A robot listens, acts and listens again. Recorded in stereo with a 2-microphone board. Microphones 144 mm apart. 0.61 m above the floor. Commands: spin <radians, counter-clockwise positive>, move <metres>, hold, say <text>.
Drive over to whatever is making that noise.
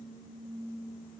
hold
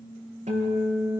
spin -0.87
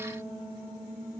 move 1.0
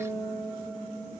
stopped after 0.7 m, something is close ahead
say Blocked. The guitar is further on, straight ahead.